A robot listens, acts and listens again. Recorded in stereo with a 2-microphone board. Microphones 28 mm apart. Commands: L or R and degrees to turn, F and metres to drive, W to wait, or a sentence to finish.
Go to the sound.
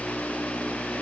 W
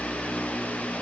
W
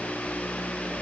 I can't make out anything.